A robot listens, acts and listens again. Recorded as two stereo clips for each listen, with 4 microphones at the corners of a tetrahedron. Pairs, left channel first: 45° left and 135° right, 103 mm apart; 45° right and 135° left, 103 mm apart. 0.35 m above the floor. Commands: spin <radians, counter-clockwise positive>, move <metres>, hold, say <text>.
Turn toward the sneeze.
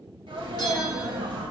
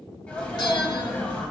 spin -2.09
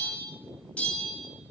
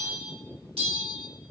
say I heard a sneeze from this way, but can't make it out now.